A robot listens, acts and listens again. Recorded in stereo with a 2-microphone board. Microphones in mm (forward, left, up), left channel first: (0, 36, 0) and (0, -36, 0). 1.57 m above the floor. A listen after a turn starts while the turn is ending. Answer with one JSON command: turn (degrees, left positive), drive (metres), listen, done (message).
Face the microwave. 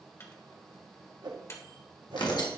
{"turn": 40}
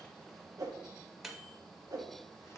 {"done": "Found it: a microwave, straight ahead."}